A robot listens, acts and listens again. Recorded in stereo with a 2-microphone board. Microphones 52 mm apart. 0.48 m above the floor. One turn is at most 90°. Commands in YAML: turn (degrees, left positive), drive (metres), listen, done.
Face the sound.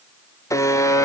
turn: 90
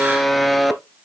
done: "Facing the buzzer."